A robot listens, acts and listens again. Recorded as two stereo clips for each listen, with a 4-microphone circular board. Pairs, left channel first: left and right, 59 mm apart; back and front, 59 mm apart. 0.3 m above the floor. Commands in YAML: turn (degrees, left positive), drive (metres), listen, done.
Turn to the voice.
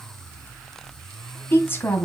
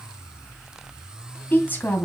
turn: 130
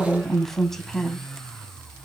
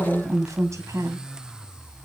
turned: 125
done: "Facing the woman speaking."